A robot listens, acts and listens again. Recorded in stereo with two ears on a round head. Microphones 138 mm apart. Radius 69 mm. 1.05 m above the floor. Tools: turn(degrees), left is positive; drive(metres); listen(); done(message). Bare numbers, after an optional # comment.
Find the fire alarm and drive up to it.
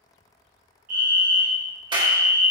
# The fire alarm: about 55° right or 125° right.
turn(-55)
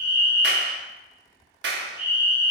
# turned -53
# So it is at 15° right.
turn(-15)
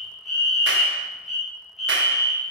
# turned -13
drive(1.0)
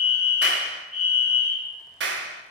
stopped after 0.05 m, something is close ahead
done("Blocked. The fire alarm is further on, straight ahead.")